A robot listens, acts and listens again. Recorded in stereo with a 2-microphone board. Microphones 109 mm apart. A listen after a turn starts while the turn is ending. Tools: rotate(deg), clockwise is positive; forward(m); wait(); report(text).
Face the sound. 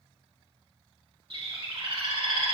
rotate(55)
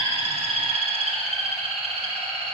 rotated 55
rotate(70)
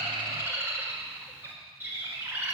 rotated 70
rotate(20)
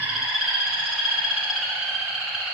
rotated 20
report("Facing the bird.")